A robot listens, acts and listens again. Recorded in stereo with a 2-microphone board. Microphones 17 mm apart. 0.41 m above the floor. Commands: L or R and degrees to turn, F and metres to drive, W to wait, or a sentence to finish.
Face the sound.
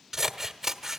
R20
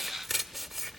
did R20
Found it: scissors, straight ahead, 1 to 2 m away.